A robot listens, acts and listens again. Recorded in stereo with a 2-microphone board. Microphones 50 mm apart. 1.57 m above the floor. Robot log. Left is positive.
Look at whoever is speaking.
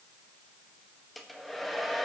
cmd idle
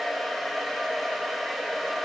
cmd idle
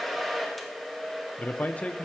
note: The man speaking: about 30° left or 150° left.
cmd yaw +30
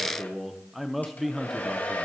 end: Facing the man speaking, under 1 m away.